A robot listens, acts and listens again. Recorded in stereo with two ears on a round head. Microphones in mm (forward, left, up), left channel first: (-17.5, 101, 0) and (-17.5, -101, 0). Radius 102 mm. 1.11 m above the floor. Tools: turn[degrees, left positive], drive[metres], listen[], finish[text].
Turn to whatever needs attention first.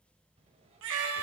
Thought: The baby crying: about 55° right or 125° right.
Action: turn[-55]
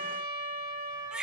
Action: finish[Found it: a baby crying, straight ahead.]